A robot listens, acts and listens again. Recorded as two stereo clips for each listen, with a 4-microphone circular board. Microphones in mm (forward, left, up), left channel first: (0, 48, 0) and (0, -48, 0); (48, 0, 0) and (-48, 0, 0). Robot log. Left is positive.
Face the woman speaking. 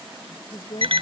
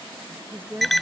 note: The woman speaking: 110° left.
cmd yaw +110
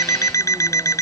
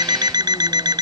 cmd idle
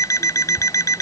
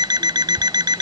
cmd idle
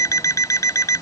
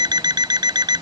end: Facing where the woman speaking came from. I can't hear it now.